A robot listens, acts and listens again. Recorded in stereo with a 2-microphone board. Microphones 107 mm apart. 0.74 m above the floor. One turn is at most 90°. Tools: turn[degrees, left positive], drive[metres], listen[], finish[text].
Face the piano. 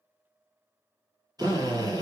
Action: listen[]
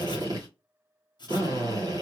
Action: listen[]
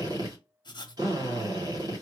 Action: finish[I can't make out a piano, only a drill and writing.]